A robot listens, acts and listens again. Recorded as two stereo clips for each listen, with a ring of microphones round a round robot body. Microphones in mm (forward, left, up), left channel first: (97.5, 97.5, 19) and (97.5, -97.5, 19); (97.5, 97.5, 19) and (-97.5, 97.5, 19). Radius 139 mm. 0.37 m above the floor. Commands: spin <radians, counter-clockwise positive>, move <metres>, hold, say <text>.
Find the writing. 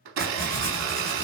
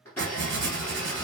spin 3.05
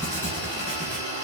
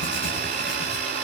spin 0.79
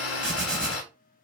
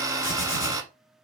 say Facing the writing, 1 to 2 m away.